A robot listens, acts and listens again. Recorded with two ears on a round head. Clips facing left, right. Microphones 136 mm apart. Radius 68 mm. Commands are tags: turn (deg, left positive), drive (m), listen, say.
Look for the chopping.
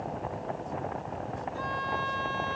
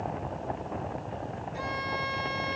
<listen/>
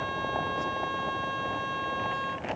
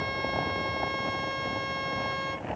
<listen/>
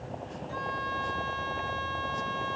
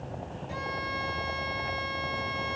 <say>I can't make out chopping to turn to.</say>